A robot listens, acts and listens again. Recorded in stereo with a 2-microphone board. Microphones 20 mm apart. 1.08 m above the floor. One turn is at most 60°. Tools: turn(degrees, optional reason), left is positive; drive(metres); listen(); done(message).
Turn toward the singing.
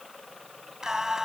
turn(degrees=-30, reason="The singing: about 30° right or 150° right.")
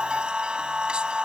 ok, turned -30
turn(degrees=-60, reason="So it is at 125° right.")
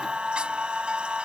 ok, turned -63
turn(degrees=-60, reason="The singing is now 65° right.")
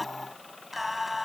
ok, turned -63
turn(degrees=-10, reason="The singing is now 10° right.")
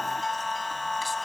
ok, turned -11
done("Found it: singing, straight ahead.")